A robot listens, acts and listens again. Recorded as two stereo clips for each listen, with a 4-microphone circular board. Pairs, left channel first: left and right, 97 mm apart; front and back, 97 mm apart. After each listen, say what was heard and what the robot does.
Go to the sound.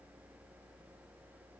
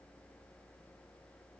Keep listening.
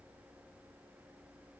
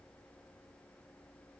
Keep listening.
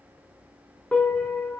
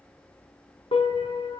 The piano: 15° left. Turn 15° left.
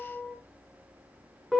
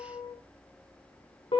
Drive 1.0 m forward.
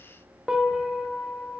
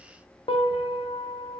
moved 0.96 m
Drive 1.0 m forward.
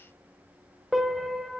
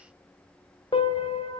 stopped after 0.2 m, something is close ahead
I am next to the piano.